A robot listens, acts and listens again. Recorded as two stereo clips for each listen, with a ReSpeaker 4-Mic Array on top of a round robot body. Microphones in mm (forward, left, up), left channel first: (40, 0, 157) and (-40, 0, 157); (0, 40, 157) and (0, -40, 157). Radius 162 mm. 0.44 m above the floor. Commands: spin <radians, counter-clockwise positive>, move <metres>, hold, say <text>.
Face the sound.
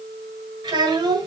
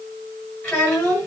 spin 2.88
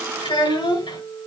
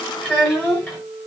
spin 0.26
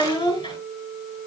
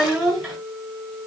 say Facing the child speaking.